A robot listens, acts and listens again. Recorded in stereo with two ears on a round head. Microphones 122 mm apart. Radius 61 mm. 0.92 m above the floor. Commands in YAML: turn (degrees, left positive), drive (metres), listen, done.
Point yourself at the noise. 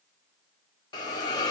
turn: 30
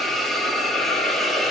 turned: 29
done: "Found it: a hiss, straight ahead."